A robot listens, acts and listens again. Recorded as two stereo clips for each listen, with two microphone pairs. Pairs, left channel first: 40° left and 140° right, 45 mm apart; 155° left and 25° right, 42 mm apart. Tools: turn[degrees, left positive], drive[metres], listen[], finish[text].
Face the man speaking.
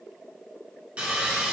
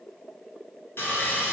Action: listen[]
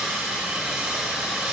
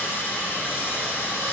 Action: listen[]
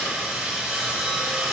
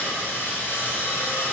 Action: finish[I can't make out a man speaking, only sawing.]